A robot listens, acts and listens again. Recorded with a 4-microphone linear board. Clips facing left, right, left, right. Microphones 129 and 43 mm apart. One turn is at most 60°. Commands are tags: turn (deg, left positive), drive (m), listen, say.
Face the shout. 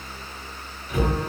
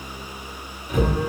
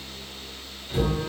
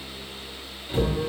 <listen/>
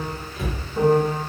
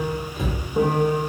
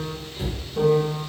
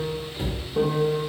<listen/>
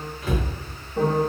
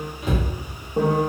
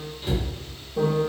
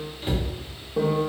<say>I can't make out a shout, only a cupboard door and a piano.</say>